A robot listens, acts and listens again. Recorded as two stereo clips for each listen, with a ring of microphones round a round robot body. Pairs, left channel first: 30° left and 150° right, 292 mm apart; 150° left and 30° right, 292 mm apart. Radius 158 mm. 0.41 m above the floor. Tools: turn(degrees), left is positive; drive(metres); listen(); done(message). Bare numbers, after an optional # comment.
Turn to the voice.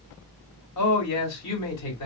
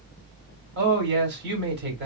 # The man speaking: 20° left.
turn(20)
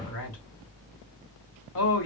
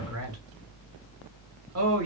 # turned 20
done("Facing the man speaking.")